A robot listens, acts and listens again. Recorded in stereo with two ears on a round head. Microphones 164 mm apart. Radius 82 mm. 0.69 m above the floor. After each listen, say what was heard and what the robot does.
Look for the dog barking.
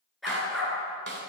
Turn 30° left.
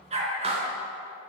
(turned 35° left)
So it is at 35° right. Turn 35° right.
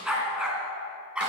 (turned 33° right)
Found it: a dog barking, straight ahead.